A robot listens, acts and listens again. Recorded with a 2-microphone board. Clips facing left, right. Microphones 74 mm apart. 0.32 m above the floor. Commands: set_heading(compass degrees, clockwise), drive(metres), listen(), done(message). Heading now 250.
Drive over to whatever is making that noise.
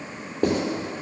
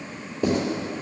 set_heading(200)
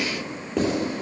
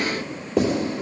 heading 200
drive(1.0)
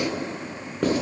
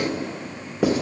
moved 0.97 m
drive(1.0)
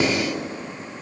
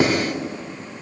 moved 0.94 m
set_heading(215)
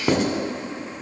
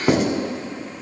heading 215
drive(1.0)
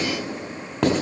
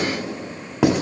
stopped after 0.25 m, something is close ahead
set_heading(225)
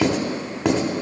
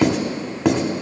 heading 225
done("Arrived at the writing, straight ahead.")